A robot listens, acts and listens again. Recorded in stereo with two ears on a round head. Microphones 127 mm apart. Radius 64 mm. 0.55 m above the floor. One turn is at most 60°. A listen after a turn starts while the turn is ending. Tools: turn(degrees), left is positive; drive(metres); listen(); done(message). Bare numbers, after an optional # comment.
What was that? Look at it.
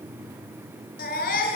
# The baby crying: about 65° left or 115° left.
turn(60)
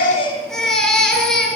done("Found it: a baby crying, straight ahead, over 4 m away.")